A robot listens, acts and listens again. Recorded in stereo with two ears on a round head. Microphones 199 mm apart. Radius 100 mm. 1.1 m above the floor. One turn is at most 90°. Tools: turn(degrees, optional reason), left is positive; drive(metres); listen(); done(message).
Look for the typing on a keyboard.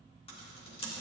turn(degrees=25, reason="The typing on a keyboard: about 25° left or 155° left.")
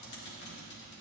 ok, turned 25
turn(degrees=90, reason="So it is at 125° left.")
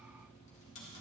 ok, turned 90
turn(degrees=30, reason="The typing on a keyboard is now 30° left.")
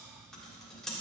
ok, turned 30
done("Facing the typing on a keyboard, 1 to 2 m away.")